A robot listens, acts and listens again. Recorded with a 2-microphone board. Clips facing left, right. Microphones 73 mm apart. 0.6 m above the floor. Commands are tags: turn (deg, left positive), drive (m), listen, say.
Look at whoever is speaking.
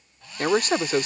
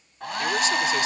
<turn deg="45"/>
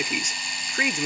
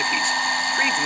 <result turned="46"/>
<listen/>
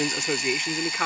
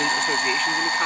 <turn deg="10"/>
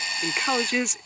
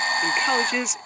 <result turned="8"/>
<say>Found it: a man speaking, straight ahead.</say>